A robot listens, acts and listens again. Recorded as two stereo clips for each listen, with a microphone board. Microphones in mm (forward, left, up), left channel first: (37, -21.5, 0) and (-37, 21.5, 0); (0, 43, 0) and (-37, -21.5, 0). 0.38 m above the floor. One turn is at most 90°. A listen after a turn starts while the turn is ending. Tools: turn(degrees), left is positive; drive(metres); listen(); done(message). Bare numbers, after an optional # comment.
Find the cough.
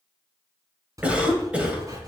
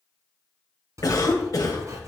# The cough: 80° left.
turn(80)
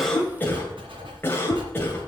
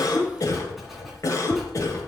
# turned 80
# The cough is now 30° left.
turn(30)
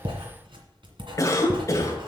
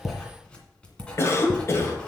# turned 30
# The cough is now 15° left.
turn(15)
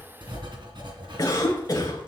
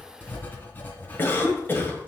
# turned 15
done("Found it: a cough, straight ahead.")